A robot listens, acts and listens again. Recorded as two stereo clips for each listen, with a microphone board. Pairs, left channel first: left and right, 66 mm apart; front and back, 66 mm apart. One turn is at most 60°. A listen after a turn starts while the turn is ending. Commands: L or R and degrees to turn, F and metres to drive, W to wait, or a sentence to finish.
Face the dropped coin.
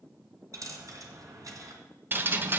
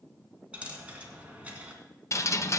R60
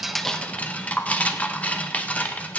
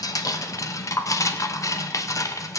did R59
R55
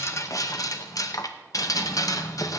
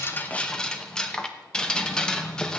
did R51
I heard a dropped coin from this way, but can't make it out now.